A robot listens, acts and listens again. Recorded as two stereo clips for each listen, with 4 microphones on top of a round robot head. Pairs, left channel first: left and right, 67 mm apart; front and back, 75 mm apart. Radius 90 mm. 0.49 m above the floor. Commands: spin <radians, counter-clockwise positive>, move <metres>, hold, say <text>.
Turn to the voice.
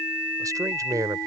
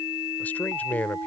spin -1.22
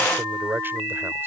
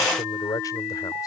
spin -0.61
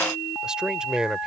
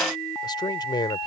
spin -0.26
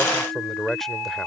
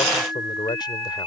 say Found it: a man speaking, straight ahead.